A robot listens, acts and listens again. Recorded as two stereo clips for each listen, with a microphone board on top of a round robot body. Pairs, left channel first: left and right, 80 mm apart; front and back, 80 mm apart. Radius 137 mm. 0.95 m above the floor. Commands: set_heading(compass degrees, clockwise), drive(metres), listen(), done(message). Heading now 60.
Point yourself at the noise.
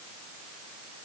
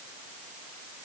listen()
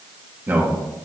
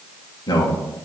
set_heading(85)
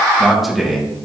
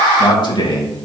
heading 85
done("Facing the man speaking.")